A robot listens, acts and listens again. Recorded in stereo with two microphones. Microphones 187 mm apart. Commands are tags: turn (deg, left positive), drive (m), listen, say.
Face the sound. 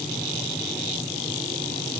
<listen/>
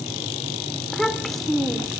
<turn deg="30"/>
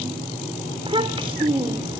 <turn deg="-30"/>
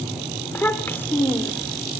<turn deg="10"/>
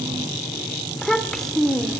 <say>Facing the child speaking, 2 to 4 m away.</say>